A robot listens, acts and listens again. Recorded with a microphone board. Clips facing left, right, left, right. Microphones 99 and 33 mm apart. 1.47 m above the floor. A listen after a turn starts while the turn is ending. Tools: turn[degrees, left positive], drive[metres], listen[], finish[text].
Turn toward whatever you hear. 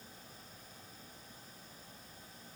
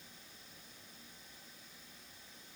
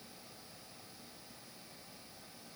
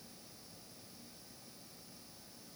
Action: listen[]
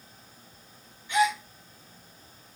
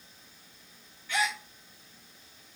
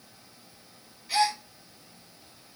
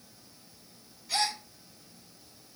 Thought: The gasp: about 20° left or 160° left.
Action: turn[20]
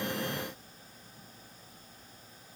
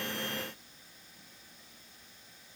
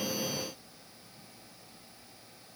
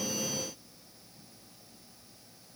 Action: listen[]
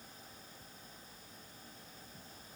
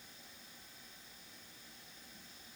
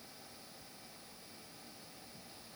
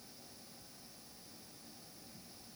Action: finish[I heard a gasp, but can't make it out now. It was about straight ahead or 140° left.]